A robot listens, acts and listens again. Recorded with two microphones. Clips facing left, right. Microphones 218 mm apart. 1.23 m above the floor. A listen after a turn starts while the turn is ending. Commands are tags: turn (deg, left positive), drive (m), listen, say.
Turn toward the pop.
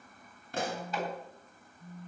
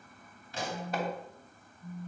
<turn deg="55"/>
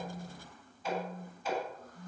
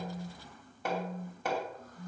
<listen/>
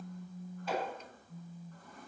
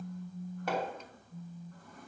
<say>I heard a pop, but can't make it out now. It was about straight ahead or 70° left.</say>